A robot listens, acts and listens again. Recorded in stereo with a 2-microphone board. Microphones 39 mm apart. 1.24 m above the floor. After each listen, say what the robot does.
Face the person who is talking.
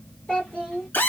Turn 25° left.
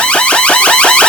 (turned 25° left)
Keep listening.
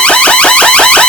Keep listening.
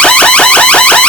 I heard a child speaking, but can't make it out now. It was about straight ahead or 130° left.